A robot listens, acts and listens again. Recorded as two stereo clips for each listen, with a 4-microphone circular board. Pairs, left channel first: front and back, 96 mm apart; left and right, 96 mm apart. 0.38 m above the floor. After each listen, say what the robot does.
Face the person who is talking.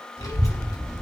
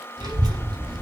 Turn 50° right.
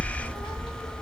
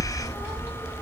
Turn 25° right.
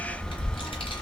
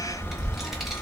Facing the child speaking, 1 to 2 m away.